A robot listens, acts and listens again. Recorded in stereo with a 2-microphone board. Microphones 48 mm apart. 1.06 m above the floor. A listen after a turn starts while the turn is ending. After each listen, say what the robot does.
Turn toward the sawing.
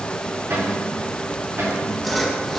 Turn 30° left.
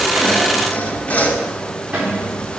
Turn 150° left.
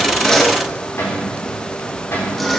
Facing the sawing, 1 to 2 m away.